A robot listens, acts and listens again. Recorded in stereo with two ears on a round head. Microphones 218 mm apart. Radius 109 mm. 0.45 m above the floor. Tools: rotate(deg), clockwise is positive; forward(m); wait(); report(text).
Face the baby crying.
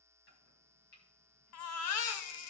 rotate(-65)
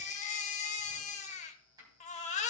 rotate(-30)
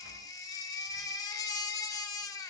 rotate(-15)
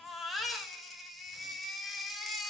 report("Facing the baby crying, 1 to 2 m away.")